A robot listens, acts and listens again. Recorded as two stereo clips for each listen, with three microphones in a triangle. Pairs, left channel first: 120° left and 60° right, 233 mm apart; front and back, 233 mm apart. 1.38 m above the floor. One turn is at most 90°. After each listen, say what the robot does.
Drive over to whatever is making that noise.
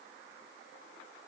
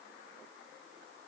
Keep listening.
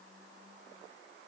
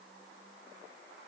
Keep listening.
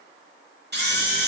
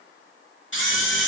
Turn 25° right.
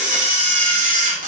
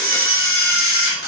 Drive 1.0 m forward.
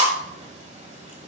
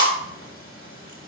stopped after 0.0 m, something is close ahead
Something is in my way. I am facing the camera shutter but have not reached it.